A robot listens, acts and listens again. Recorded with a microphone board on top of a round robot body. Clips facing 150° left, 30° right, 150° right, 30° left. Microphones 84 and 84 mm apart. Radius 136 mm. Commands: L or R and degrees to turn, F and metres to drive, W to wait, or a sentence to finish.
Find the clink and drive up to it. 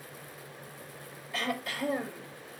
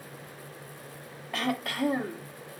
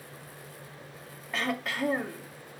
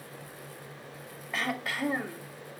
W
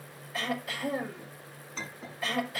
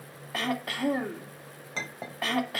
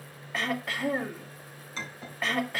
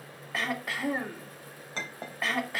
R15
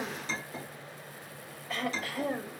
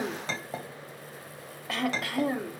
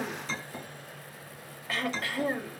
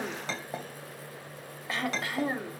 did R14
F1.0
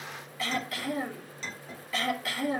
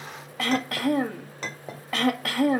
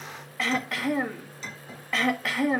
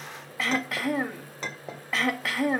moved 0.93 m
F1.0
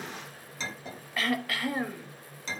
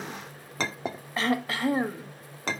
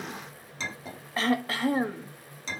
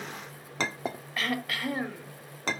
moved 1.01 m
F1.0
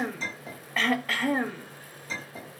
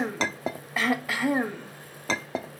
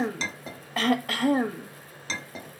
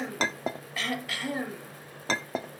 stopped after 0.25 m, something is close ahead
R10
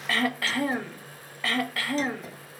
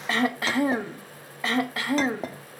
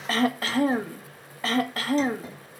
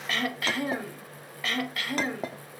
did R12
Arrived at the clink, straight ahead.